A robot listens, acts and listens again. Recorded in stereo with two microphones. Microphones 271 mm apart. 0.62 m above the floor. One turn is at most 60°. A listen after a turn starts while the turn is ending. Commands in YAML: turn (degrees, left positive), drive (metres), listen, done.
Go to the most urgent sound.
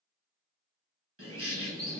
listen: true
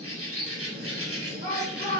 turn: -25
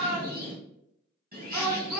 drive: 1.0
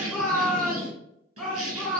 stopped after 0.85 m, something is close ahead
done: "I am next to the shout."